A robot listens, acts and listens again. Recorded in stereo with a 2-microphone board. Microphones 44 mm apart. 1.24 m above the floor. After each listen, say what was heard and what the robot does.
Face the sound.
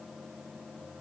Keep listening.
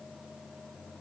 Keep listening.
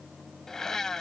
The blender: about 15° left or 165° left. Turn 15° left.
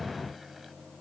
Keep listening.
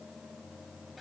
Keep listening.
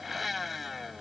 Found it: a blender, straight ahead.